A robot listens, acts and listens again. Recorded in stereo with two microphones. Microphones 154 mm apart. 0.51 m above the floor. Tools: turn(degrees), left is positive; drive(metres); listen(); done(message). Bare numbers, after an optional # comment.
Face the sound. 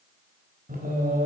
# The singing: about 70° right or 110° right.
turn(-70)
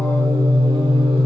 # So it is at 35° right.
turn(-35)
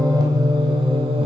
# The singing is now 35° right.
turn(-35)
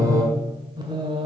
# The singing is now 30° right.
turn(-30)
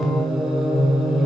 done("Facing the singing, 1 to 2 m away.")